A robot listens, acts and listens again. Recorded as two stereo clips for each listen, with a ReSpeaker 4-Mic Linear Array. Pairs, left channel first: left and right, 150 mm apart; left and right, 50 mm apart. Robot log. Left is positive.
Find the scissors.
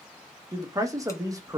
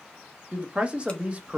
cmd idle
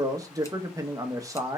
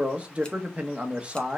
cmd idle
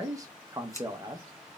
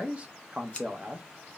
note: The scissors: about 20° left or 160° left.
cmd yaw +20
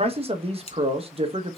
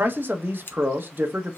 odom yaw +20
note: So it is at 135° left.
cmd yaw +135
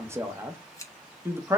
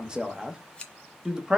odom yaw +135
note: The scissors is now 20° left.
cmd yaw +20
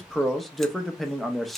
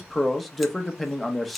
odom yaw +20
cmd idle
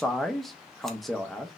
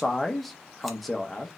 cmd idle
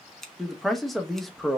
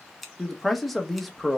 end: Facing the scissors.